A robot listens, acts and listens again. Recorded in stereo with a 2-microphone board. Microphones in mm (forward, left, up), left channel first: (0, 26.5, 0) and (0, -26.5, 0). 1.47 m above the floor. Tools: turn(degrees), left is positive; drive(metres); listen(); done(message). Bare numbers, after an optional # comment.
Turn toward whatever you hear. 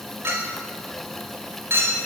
# The clink: about 50° right or 130° right.
turn(-50)
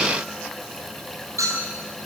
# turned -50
# So it is at 80° right.
turn(-80)
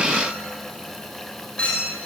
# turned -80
# The clink is now 20° left.
turn(20)
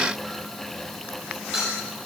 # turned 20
done("Facing the clink.")